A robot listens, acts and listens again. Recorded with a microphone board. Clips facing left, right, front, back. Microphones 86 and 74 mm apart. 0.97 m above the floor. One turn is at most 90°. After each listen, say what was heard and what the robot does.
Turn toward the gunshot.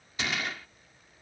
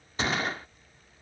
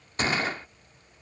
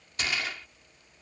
The gunshot: 45° right. Turn 45° right.
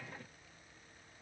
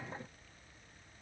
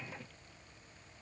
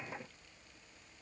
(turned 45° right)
Facing where the gunshot came from. I can't hear it now.